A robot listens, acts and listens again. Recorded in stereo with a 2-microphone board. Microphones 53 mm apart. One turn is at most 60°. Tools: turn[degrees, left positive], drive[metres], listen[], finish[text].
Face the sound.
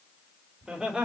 Thought: The laughter: about 20° right or 160° right.
Action: turn[-20]
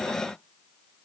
Action: listen[]
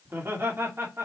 Thought: So it is at 130° right.
Action: turn[-60]
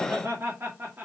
Thought: The laughter is now 40° right.
Action: turn[-40]
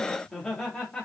Thought: The laughter is now 15° left.
Action: turn[15]
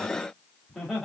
Action: finish[Facing the laughter.]